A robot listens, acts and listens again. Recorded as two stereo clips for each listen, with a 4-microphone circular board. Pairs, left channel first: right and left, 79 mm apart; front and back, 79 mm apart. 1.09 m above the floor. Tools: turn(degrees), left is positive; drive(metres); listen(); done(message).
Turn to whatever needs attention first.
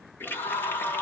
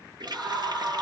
turn(degrees=-90)
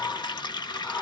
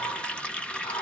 turn(degrees=-10)
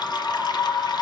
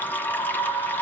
done("Facing the scream, 1 to 2 m away.")